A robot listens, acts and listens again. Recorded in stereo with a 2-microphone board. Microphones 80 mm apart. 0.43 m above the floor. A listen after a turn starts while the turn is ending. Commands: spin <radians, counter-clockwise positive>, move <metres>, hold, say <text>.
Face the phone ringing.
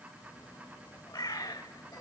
hold
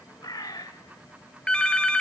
spin 0.52
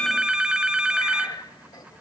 spin -0.17
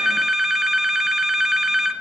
say Facing the phone ringing, 1 to 2 m away.